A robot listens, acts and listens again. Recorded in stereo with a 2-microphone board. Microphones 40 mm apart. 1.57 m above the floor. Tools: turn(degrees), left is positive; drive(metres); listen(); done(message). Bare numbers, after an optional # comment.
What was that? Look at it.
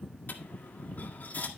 # The dropped coin: about 50° left or 130° left.
turn(50)
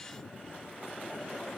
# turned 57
listen()
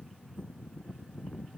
done("I heard a dropped coin, but can't make it out now. It was about 10° right or 75° left.")